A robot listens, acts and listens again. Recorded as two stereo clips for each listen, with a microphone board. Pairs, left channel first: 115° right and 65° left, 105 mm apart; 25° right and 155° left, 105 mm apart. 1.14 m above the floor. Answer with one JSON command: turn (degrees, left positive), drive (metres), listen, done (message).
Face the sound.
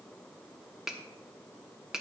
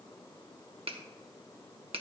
{"turn": 150}
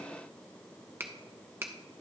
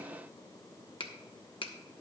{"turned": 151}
{"done": "Found it: a finger snap, straight ahead."}